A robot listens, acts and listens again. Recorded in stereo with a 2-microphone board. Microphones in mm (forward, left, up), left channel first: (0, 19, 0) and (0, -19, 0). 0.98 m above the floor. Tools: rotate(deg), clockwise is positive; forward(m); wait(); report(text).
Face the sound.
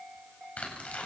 rotate(-40)
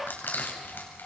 rotate(-100)
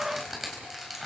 report("Facing the tearing paper.")